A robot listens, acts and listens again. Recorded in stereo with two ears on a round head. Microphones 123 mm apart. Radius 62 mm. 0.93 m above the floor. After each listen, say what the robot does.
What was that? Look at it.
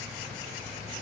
Keep listening.
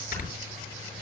Turn 70° left.
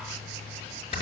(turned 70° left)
Turn 40° left.
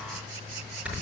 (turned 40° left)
Turn 10° right.
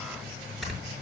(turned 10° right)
Found it: snoring, straight ahead.